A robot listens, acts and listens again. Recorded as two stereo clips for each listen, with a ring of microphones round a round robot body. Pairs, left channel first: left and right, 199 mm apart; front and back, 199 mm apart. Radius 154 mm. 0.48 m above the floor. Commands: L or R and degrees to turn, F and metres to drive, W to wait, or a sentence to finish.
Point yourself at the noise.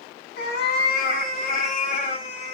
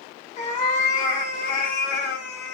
L35
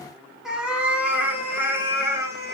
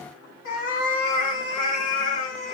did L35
R15
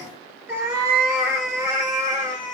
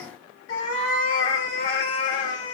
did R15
R15
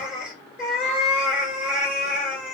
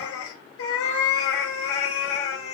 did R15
Found it: a cat meowing, straight ahead, 2 to 4 m away.